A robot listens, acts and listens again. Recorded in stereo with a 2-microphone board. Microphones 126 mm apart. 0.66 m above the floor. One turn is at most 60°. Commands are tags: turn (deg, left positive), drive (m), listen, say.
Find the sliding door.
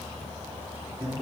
<listen/>
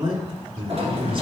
<turn deg="-55"/>
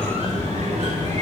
<turn deg="-60"/>
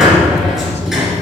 <say>Facing the sliding door, 1 to 2 m away.</say>